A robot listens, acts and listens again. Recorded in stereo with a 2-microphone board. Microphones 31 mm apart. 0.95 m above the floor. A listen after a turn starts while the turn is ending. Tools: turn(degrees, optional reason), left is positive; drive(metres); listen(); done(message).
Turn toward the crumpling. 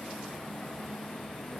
listen()
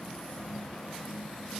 listen()
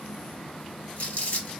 turn(degrees=55, reason="The crumpling: about 55° left or 125° left.")
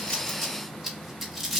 done("Facing the crumpling, 1 to 2 m away.")